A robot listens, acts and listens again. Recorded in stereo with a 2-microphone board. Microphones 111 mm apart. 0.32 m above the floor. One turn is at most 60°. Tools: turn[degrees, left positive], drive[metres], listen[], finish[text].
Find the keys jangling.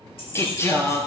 Thought: The keys jangling: about 55° left or 125° left.
Action: turn[55]
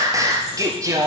Action: listen[]
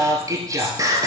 Action: listen[]
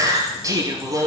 Action: finish[I heard keys jangling, but can't make it out now. It was about straight ahead or 70° left.]